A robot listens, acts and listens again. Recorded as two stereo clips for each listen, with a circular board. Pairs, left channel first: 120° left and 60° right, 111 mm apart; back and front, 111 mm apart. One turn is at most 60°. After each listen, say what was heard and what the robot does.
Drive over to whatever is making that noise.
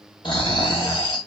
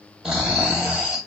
The snoring: 85° left. Turn 60° left.
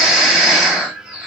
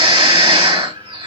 The snoring is now 30° left. Turn 30° left.
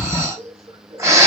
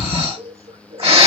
Drive 1.0 m forward.
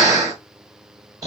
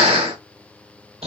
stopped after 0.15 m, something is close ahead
Blocked. The snoring is further on, straight ahead.